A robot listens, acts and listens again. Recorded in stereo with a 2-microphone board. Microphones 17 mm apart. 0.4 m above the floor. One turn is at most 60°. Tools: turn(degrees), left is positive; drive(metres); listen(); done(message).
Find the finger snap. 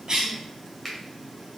turn(degrees=30)
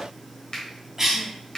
turn(degrees=60)
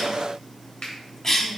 turn(degrees=60)
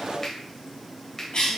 turn(degrees=25)
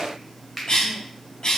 done("Facing the finger snap.")